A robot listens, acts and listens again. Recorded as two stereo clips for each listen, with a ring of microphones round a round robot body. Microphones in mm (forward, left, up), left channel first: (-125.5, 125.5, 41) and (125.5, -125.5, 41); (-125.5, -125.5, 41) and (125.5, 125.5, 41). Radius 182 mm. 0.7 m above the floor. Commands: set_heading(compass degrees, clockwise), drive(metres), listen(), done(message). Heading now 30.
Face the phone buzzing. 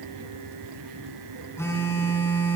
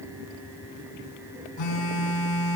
set_heading(170)
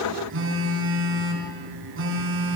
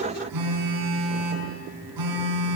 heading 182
set_heading(172)
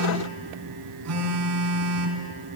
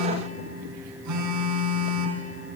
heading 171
done("Facing the phone buzzing.")